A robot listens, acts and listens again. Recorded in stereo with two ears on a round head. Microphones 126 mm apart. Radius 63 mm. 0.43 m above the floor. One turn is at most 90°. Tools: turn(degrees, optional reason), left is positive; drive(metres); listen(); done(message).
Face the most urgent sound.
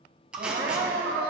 turn(degrees=-55, reason="The crying: about 55° right or 125° right.")
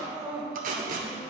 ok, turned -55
done("Found it: crying, straight ahead, 1 to 2 m away.")